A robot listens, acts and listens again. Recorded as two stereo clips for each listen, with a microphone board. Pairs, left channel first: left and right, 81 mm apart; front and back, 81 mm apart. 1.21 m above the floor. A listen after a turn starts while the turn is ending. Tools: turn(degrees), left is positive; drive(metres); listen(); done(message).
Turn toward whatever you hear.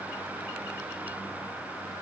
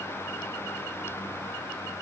listen()
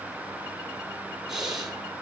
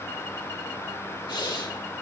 turn(degrees=-10)
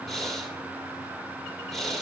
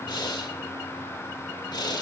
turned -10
done("Facing the breathing, 1 to 2 m away.")